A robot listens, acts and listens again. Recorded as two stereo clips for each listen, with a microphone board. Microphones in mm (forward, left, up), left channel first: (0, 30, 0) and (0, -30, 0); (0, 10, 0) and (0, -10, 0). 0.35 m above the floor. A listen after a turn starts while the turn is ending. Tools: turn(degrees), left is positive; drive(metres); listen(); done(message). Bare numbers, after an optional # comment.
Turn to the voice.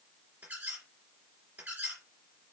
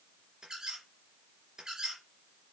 listen()
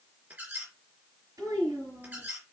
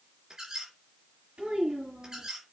# The child speaking: about 75° right or 105° right.
turn(-75)
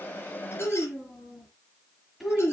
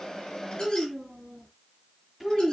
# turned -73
done("Found it: a child speaking, straight ahead, over 4 m away.")